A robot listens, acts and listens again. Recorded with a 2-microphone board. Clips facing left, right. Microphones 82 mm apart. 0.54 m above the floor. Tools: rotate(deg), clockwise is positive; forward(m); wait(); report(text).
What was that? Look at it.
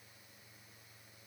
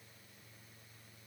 wait()
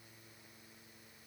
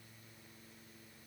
wait()
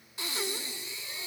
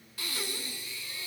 rotate(-20)
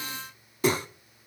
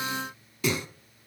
rotate(-140)
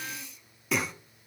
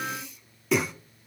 report("Found it: breathing, straight ahead, under 1 m away.")